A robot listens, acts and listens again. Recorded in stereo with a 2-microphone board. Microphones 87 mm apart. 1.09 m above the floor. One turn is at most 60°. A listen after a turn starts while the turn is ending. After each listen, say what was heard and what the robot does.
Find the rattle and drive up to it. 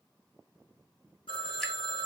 Keep listening.
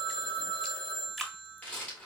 The rattle: about 15° left or 165° left. Turn 15° left.
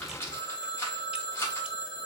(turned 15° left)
So it is at 145° left. Turn 60° left.
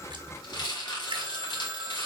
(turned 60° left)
The rattle is now 65° left. Turn 60° left.
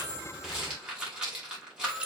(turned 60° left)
The rattle is now 10° right. Turn 10° right.
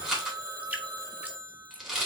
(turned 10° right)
Drive 1.0 m forward.
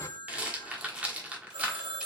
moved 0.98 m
The rattle is now 15° right. Turn 15° right.
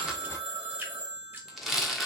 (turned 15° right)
Drive 1.0 m forward.
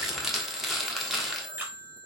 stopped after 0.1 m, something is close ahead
I am next to the rattle.